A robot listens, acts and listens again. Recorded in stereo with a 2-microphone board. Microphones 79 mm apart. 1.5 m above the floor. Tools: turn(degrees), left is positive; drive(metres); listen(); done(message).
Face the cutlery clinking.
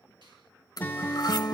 turn(degrees=55)
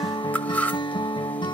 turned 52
turn(degrees=25)
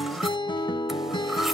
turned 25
listen()
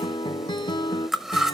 done("Facing the cutlery clinking, 1 to 2 m away.")